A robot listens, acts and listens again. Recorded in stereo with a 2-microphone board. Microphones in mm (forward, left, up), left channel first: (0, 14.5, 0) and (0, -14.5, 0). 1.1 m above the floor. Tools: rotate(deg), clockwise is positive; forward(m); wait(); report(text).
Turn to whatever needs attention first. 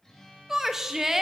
rotate(30)
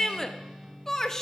rotate(-15)
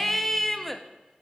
report("Facing the shout, 1 to 2 m away.")